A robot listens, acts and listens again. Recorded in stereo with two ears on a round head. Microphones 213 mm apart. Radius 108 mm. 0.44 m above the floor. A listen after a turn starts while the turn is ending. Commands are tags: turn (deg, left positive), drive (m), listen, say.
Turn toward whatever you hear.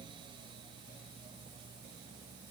<listen/>
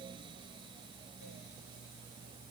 <listen/>
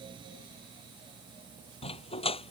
<turn deg="25"/>
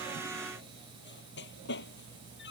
<turn deg="130"/>
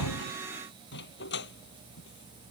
<turn deg="45"/>
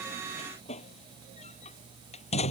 <turn deg="25"/>
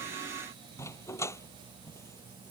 <turn deg="10"/>
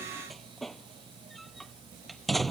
<say>Facing the dog barking.</say>